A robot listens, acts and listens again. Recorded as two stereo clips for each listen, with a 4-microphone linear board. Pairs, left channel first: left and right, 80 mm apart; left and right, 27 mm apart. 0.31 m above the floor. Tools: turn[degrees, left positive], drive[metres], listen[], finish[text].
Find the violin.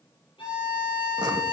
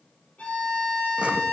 Action: turn[90]
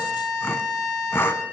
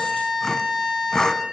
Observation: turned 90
Action: finish[Facing the violin, over 4 m away.]